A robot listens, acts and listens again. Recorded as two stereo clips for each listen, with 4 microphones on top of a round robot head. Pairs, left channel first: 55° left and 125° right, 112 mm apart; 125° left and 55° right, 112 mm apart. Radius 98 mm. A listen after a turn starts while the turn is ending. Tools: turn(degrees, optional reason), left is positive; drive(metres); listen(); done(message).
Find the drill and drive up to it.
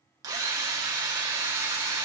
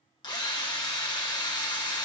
turn(degrees=175, reason="The drill: 175° left.")
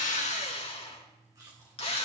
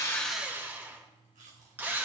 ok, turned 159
turn(degrees=20, reason="The drill is now 20° left.")
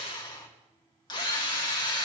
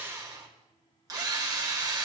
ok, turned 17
drive(metres=1.0)
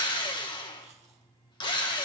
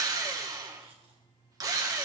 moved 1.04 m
drive(metres=1.0)
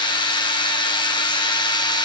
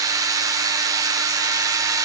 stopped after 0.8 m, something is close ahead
done("I am next to the drill.")